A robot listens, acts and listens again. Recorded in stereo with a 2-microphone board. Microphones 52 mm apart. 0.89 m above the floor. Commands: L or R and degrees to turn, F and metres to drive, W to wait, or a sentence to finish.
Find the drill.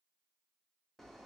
W
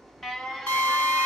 L40
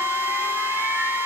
L95
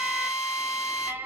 R15
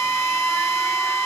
Found it: a drill, straight ahead, 2 to 4 m away.